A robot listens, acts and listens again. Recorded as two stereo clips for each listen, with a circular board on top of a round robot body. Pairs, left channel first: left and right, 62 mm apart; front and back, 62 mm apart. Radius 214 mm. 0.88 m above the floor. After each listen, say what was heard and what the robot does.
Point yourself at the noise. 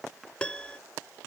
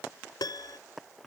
The piano: 15° left. Turn 15° left.
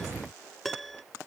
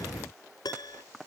Found it: a piano, straight ahead.